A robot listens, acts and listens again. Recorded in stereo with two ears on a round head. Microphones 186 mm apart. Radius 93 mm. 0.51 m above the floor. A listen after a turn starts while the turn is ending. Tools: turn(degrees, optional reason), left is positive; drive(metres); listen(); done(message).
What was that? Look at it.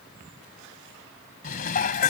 turn(degrees=40, reason="The dishes clattering: about 40° left or 140° left.")
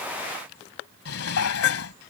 turn(degrees=100, reason="So it is at 100° left.")
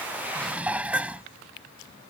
done("Facing the dishes clattering.")